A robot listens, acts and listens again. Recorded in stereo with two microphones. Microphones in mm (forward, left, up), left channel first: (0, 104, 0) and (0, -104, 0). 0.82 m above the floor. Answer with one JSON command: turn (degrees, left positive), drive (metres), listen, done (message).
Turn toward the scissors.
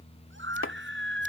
{"listen": true}
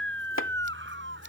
{"listen": true}
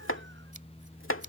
{"done": "I can't make out scissors, only chopping and a scream."}